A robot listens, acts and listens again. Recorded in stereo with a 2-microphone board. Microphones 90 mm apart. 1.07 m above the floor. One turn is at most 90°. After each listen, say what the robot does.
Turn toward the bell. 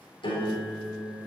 Keep listening.
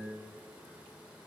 Keep listening.
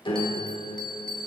Turn 30° left.
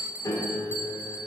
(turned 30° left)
Turn 20° right.
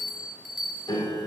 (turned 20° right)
Found it: a bell, straight ahead.